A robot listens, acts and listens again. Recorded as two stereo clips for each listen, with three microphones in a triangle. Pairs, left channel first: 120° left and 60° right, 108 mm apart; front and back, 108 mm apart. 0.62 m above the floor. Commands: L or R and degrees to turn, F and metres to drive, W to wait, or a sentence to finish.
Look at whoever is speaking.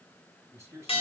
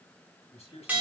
Facing the man speaking.